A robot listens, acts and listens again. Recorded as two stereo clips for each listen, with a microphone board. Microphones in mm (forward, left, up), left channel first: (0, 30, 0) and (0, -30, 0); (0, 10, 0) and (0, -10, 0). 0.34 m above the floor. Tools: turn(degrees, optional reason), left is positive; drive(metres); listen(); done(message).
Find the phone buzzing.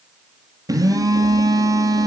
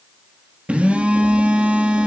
turn(degrees=-90)
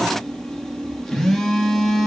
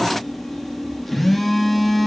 turn(degrees=10, reason="So it is at 10° left.")
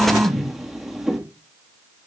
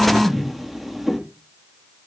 done("Found it: a phone buzzing, straight ahead.")